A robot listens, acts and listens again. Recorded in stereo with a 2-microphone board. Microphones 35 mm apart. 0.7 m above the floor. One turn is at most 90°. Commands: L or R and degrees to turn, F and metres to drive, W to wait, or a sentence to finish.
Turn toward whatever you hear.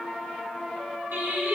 R90
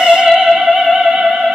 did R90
R40
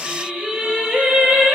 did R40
R50
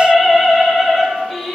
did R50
Facing the singing.